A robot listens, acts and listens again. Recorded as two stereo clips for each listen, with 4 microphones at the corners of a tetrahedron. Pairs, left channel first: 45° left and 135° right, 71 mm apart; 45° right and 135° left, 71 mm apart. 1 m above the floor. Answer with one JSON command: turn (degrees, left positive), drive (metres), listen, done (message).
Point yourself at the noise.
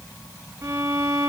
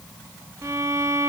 {"turn": 175}
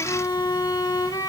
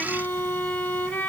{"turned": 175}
{"turn": 20}
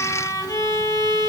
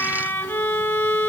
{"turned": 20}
{"turn": 10}
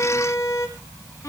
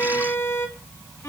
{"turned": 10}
{"done": "Facing the violin."}